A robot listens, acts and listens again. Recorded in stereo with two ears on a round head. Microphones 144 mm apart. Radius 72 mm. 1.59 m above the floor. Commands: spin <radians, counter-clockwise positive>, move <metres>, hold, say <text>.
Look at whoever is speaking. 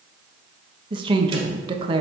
spin -0.52
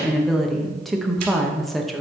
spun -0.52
say Facing the woman speaking.